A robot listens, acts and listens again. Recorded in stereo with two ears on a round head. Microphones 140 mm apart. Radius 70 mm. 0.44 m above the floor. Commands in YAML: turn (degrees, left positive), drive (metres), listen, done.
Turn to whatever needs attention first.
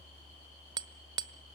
listen: true
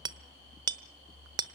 listen: true
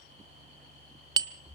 done: "I can't make out anything urgent, only hammering."